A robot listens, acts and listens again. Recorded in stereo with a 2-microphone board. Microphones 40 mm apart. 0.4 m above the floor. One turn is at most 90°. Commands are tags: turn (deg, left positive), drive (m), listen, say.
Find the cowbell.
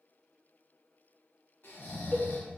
<turn deg="50"/>
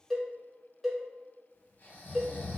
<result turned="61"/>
<say>Facing the cowbell.</say>